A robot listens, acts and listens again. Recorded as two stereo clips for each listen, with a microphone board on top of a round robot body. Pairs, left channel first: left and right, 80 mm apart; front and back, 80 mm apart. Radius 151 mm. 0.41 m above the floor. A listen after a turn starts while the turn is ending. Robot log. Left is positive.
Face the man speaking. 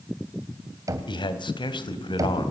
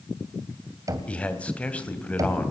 note: The man speaking: 75° left.
cmd yaw +75
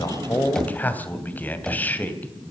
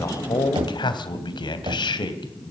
note: The man speaking is now 20° left.
cmd yaw +20
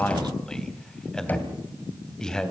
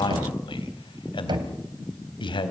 note: The man speaking is now 10° left.
cmd yaw +10
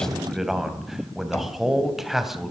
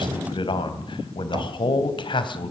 end: Found it: a man speaking, straight ahead, 2 to 4 m away.